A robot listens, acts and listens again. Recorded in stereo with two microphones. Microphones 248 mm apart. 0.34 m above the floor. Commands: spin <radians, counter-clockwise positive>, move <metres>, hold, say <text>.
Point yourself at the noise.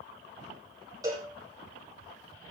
spin -0.52
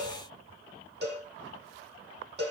spin -2.36
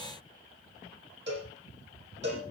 spin -0.79
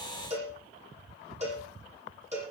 spin -0.44
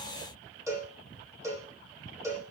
spin -0.17
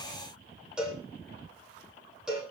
say Facing the cowbell.